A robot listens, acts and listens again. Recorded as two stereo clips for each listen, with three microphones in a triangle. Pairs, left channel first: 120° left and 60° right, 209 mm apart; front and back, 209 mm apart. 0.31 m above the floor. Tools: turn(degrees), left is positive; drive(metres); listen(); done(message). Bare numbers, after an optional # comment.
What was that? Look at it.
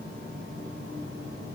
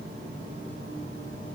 listen()
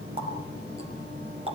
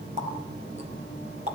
# The running tap: 125° right.
turn(-125)
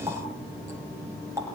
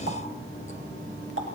# The running tap is now 15° left.
turn(15)
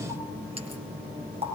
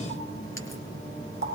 done("Found it: a running tap, straight ahead.")